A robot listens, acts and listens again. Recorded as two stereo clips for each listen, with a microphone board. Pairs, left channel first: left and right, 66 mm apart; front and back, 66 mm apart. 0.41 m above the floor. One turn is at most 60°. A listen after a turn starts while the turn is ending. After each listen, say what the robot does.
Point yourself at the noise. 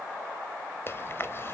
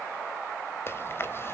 Turn 45° left.
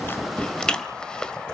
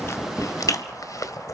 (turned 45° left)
Turn 15° left.
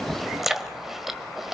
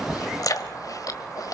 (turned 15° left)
Found it: chewing, straight ahead.